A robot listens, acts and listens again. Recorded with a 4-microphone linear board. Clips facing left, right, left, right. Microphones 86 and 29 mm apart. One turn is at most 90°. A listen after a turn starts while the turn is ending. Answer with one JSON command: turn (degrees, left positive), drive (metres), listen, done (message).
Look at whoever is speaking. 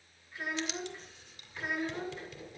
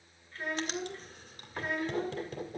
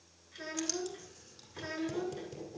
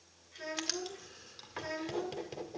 {"turn": 30}
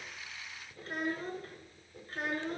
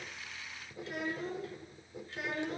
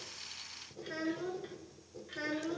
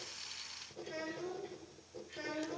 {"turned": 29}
{"turn": 90}
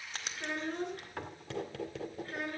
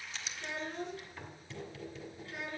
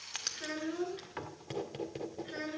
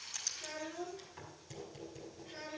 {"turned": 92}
{"turn": 45}
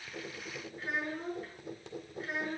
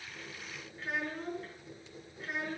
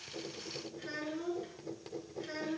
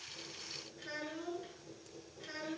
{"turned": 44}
{"done": "Facing the child speaking, over 4 m away."}